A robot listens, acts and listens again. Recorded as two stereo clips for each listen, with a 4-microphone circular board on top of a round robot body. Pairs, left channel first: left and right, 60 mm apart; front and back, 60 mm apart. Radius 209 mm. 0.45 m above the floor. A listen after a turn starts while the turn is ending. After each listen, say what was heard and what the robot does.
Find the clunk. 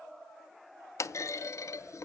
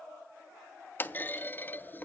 The clunk: 55° left. Turn 55° left.
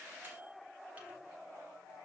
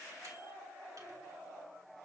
I heard a clunk from this way, but can't make it out now.